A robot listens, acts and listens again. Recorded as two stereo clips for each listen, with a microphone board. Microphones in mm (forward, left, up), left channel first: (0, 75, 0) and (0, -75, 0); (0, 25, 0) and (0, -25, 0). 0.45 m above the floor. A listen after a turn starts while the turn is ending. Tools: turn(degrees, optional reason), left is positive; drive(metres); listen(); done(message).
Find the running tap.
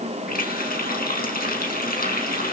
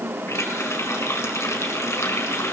turn(degrees=90)
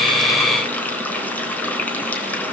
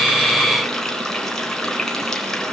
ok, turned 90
turn(degrees=10, reason="So it is at 10° left.")
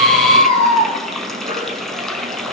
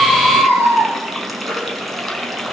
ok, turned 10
done("Found it: a running tap, straight ahead, 2 to 4 m away.")